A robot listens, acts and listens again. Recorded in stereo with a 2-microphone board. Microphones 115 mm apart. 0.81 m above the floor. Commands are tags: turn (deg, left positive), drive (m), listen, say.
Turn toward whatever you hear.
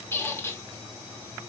<turn deg="20"/>
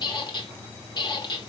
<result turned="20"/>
<turn deg="140"/>
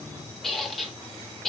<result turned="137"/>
<say>Facing the squeak.</say>